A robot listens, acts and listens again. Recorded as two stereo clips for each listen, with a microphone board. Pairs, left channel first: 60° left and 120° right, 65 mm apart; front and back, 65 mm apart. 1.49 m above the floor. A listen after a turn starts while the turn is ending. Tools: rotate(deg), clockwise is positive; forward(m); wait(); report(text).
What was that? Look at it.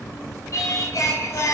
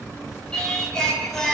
rotate(-80)
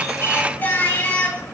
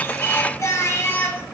rotate(-15)
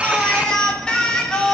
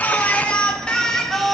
rotate(-85)
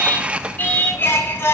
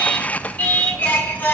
rotate(-45)
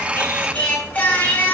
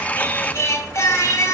report("Found it: singing, straight ahead, 1 to 2 m away.")